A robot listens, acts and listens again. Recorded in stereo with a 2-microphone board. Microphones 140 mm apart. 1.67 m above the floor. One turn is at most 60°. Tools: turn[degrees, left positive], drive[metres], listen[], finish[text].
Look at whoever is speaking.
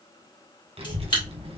Thought: The child speaking: about 45° right or 135° right.
Action: turn[-45]
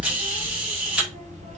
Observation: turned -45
Thought: So it is at 80° right.
Action: turn[-60]
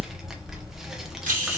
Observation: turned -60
Action: finish[Found it: a child speaking, straight ahead, under 1 m away.]